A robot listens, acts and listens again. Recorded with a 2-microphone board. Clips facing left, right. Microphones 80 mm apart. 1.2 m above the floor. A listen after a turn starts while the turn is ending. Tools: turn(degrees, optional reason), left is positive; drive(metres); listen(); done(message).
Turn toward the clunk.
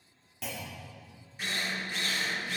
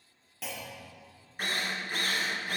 turn(degrees=30)
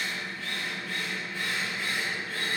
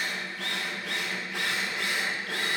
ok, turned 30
listen()
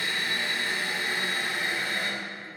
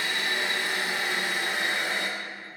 done("I heard a clunk, but can't make it out now. It was about 30° right or 150° left.")